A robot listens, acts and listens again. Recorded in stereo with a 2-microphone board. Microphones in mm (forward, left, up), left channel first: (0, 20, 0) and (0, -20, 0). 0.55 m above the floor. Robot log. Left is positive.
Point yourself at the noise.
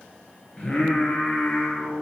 note: The singing: about 30° left or 150° left.
cmd yaw +30
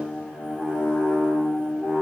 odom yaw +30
note: So it is at 100° left.
cmd yaw +100
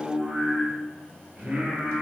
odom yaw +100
note: The singing is now 30° right.
cmd yaw -30
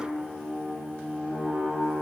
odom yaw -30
end: Found it: singing, straight ahead, 2 to 4 m away.